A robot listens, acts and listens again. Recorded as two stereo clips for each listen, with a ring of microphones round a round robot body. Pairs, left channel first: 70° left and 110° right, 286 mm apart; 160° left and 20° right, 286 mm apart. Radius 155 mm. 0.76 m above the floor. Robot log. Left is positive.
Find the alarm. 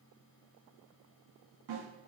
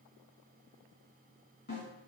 cmd idle
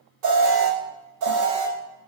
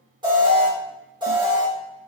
note: The alarm: 95° right.
cmd yaw -95
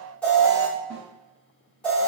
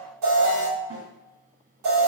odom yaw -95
note: The alarm is now 20° right.
cmd yaw -20
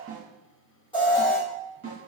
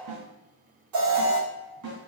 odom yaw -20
end: Found it: an alarm, straight ahead.